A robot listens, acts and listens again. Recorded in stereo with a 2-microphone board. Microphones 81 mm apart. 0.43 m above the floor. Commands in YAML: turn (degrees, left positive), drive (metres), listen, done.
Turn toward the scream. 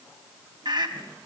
turn: -65
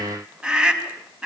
turn: -10
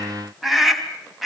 done: "Facing the scream."